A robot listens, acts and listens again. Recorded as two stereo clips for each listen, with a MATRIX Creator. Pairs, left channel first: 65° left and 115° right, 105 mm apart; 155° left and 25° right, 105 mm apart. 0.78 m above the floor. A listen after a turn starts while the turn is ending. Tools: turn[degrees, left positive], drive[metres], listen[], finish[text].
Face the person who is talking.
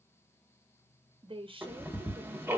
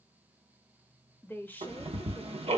Thought: The woman speaking: 135° right.
Action: turn[-135]
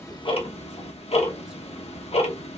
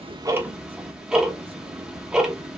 Action: listen[]
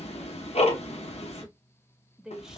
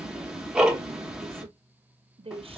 Thought: The woman speaking is now 30° right.
Action: turn[-30]
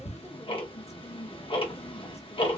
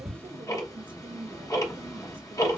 Action: listen[]
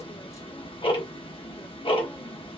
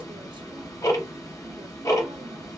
Action: listen[]
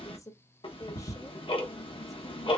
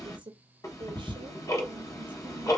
Thought: The woman speaking is now 10° left.
Action: turn[10]
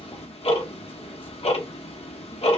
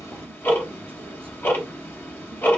Action: listen[]
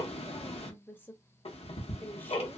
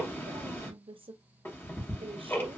Action: finish[Found it: a woman speaking, straight ahead, under 1 m away.]